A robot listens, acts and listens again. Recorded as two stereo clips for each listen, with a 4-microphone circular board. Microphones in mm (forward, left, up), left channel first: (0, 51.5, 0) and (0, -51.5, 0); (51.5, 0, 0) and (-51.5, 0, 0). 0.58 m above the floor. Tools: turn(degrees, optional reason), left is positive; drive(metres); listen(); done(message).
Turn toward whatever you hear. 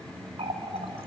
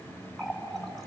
turn(degrees=-90, reason="The running tap: 90° right.")
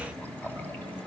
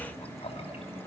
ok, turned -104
turn(degrees=15, reason="The running tap is now 15° left.")
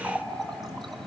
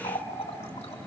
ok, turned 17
done("Found it: a running tap, straight ahead.")